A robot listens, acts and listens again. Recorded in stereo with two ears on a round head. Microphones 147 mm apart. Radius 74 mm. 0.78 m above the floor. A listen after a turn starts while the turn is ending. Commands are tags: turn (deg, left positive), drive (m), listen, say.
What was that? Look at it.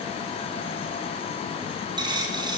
<turn deg="-25"/>
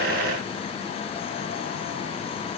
<listen/>
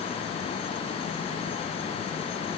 <say>I heard a dropped coin, but can't make it out now. It was about straight ahead or 130° right.</say>